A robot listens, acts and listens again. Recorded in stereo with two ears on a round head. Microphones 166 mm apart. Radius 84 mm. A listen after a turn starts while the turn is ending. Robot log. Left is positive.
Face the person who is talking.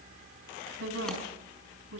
cmd yaw -90
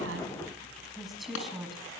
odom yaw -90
end: Found it: a woman speaking, straight ahead, over 4 m away.